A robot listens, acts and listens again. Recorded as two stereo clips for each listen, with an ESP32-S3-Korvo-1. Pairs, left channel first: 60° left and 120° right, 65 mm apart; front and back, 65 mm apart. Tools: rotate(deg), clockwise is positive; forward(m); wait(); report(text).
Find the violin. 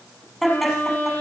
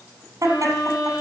report("Found it: a violin, straight ahead.")